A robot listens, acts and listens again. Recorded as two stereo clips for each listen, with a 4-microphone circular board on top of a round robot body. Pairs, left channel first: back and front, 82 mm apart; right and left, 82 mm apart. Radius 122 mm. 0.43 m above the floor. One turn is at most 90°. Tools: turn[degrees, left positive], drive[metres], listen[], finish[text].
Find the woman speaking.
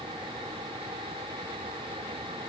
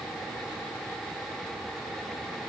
Action: listen[]
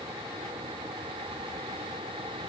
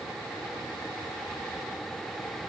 Action: listen[]
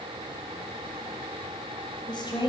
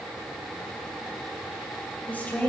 Thought: The woman speaking: 165° right.
Action: turn[-90]
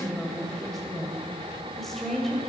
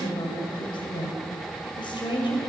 Thought: The woman speaking is now 95° right.
Action: turn[-90]
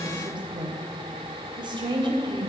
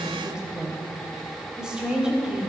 Thought: The woman speaking is now 10° left.
Action: turn[10]
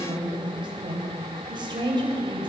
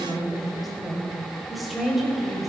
Action: finish[Found it: a woman speaking, straight ahead, 2 to 4 m away.]